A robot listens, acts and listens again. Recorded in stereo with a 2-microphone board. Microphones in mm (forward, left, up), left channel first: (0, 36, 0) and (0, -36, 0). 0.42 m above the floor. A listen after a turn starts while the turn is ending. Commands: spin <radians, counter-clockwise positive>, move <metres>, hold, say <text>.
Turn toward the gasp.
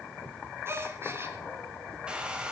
spin -0.61
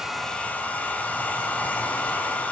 hold
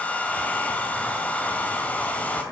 say I heard a gasp, but can't make it out now. It was about straight ahead or 110° right.